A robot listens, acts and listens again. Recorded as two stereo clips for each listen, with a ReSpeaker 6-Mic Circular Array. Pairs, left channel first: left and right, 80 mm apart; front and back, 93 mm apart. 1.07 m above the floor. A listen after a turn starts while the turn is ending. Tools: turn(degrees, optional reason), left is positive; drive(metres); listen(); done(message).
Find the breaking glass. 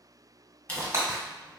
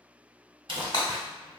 turn(degrees=-35, reason="The breaking glass: 35° right.")
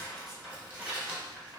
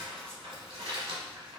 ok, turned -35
done("I heard breaking glass from this way, but can't make it out now.")